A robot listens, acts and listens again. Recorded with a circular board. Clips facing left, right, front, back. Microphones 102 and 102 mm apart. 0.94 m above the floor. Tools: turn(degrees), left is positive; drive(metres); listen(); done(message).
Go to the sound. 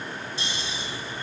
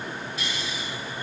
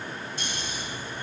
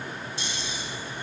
turn(degrees=30)
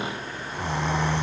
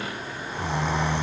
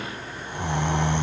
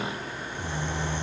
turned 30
drive(metres=1.0)
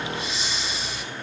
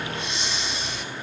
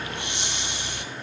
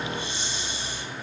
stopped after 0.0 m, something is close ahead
done("Something is in my way. I am facing the snoring but have not reached it.")